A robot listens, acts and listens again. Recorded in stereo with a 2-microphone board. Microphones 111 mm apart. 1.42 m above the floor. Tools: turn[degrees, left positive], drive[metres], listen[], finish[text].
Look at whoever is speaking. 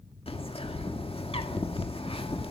Action: listen[]
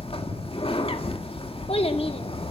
Thought: The child speaking: about 65° left or 115° left.
Action: turn[65]
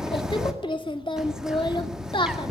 Thought: So it is at 50° left.
Action: turn[50]
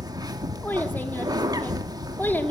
Action: listen[]
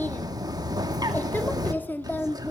Thought: The child speaking is now 20° left.
Action: turn[20]
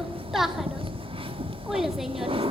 Action: finish[Facing the child speaking, 2 to 4 m away.]